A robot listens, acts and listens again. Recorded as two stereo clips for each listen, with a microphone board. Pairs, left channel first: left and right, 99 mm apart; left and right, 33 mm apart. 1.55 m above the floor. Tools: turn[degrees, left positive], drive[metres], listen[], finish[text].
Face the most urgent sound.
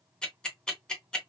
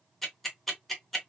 Action: listen[]
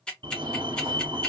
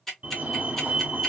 Thought: The fire alarm: about 50° right or 130° right.
Action: turn[-50]
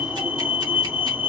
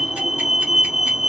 Thought: So it is at 10° right.
Action: turn[-10]
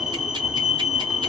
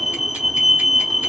Action: finish[Facing the fire alarm, 1 to 2 m away.]